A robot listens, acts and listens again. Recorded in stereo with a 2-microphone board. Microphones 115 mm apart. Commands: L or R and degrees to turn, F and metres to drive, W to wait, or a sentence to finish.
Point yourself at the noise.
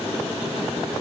W
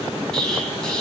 L30
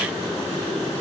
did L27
W
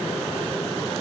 I heard an explosion, but can't make it out now. It was about 20° right or 145° left.